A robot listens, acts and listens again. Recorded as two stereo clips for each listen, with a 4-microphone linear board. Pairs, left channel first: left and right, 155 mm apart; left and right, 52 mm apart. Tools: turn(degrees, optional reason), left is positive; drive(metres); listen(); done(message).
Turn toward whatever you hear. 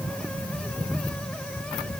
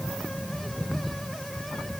listen()
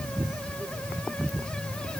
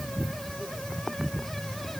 listen()
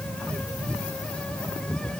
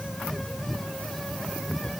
done("I can't make out anything.")